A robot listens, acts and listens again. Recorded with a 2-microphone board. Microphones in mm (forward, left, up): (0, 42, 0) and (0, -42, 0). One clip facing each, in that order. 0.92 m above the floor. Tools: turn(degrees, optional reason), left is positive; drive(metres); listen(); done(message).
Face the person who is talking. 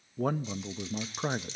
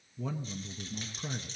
turn(degrees=55, reason="The man speaking: about 55° left or 125° left.")
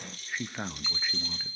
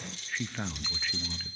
turn(degrees=15, reason="So it is at 15° left.")
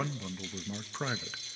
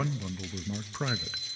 done("Found it: a man speaking, straight ahead.")